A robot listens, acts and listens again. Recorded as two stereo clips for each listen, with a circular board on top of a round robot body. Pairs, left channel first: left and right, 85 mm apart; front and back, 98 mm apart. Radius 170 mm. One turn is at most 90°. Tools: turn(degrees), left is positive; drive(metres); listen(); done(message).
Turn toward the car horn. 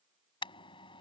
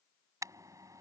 turn(degrees=90)
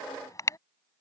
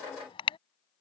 turn(degrees=35)
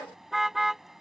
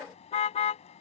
done("Facing the car horn.")